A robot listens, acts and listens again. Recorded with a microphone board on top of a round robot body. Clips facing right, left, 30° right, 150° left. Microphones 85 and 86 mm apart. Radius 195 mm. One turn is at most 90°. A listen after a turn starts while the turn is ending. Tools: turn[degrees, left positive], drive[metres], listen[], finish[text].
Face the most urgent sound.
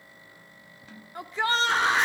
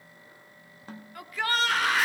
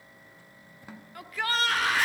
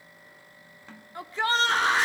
Thought: The shout: 150° right.
Action: turn[-90]
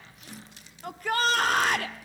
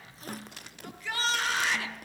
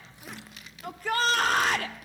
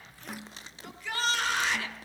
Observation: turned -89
Thought: The shout is now 60° right.
Action: turn[-60]
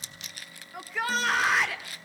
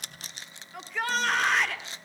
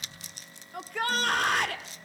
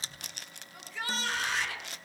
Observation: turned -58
Action: finish[Facing the shout.]